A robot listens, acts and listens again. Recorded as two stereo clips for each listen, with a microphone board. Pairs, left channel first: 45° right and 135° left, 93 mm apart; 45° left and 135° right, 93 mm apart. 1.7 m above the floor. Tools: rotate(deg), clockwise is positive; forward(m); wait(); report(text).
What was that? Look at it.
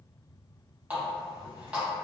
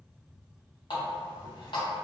rotate(-60)
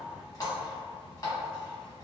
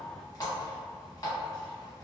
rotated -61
report("Facing the running tap.")